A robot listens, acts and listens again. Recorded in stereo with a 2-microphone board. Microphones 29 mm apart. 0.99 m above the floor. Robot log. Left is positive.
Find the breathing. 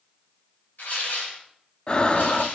note: The breathing: about 35° left or 145° left.
cmd yaw +35
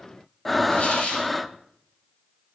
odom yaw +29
note: So it is at 10° left.
cmd yaw +10
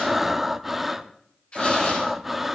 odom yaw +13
end: Found it: breathing, straight ahead, under 1 m away.